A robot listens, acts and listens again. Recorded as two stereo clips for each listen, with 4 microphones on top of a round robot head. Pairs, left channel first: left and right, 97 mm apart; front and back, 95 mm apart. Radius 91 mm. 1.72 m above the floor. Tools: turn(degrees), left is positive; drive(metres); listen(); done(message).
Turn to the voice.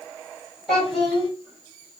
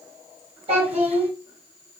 turn(degrees=180)
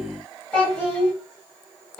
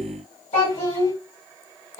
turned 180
turn(degrees=10)
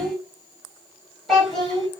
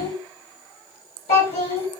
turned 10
done("Found it: a child speaking, straight ahead.")